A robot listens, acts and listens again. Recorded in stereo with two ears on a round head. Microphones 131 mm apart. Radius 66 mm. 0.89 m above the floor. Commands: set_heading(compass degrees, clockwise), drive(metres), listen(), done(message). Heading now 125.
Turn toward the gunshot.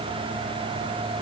listen()
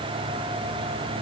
listen()
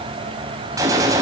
set_heading(145)
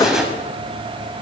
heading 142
done("Facing the gunshot, over 4 m away.")